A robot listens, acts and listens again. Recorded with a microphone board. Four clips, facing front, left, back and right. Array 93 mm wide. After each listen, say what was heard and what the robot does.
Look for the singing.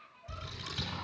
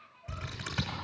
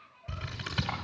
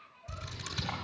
Keep listening.
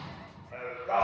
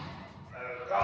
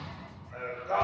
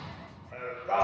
The singing: 50° right. Turn 50° right.
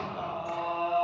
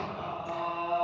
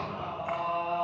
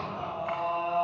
The singing is now 20° right. Turn 20° right.
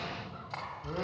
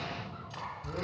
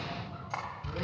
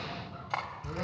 Keep listening.
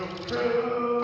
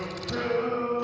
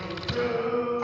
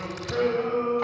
Found it: singing, straight ahead, over 4 m away.